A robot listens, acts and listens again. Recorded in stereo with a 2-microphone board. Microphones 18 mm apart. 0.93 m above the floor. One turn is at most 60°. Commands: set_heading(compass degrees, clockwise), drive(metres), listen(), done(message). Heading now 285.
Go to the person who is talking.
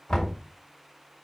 listen()
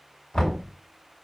listen()
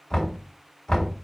done("I can't make out anyone speaking, only knocking.")